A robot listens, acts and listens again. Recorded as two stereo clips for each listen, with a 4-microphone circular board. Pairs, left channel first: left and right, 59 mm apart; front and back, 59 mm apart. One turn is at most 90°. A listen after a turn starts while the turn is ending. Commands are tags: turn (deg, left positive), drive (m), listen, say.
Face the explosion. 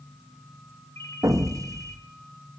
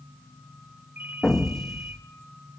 <turn deg="-80"/>
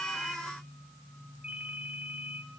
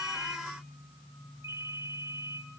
<say>I heard an explosion from this way, but can't make it out now.</say>